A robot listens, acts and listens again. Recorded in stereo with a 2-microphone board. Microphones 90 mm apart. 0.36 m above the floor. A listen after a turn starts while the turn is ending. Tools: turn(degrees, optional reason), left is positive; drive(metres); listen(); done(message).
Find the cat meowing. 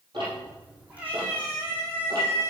turn(degrees=-30, reason="The cat meowing: about 30° right or 150° right.")
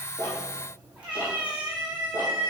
turn(degrees=-20, reason="The cat meowing: about 20° right or 160° right.")
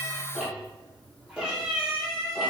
turn(degrees=-10, reason="So it is at 10° right.")
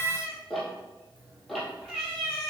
done("Found it: a cat meowing, straight ahead, 2 to 4 m away.")